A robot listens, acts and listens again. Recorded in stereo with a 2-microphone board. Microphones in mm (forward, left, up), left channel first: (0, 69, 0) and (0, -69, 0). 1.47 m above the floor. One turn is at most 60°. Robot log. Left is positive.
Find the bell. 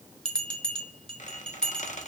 cmd yaw +30
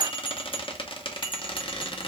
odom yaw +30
note: So it is at 145° left.
cmd yaw +60
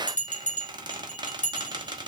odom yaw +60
note: The bell is now 65° left.
cmd yaw +60
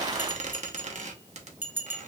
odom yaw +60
note: The bell is now 15° right.
cmd yaw -15
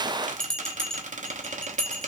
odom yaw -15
end: Facing the bell, under 1 m away.